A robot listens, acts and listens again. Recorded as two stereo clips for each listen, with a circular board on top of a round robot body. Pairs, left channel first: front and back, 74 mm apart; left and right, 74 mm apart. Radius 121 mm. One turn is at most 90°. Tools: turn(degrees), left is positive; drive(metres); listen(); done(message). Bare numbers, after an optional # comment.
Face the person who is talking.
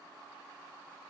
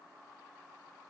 listen()
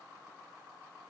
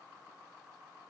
listen()
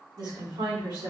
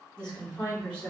# The woman speaking: 170° left.
turn(90)
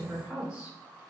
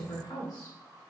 # The woman speaking is now 100° left.
turn(90)
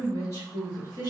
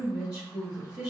# The woman speaking is now 40° left.
turn(40)
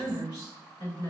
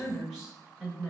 # The woman speaking is now 10° right.
turn(-10)
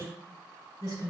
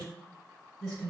done("Found it: a woman speaking, straight ahead.")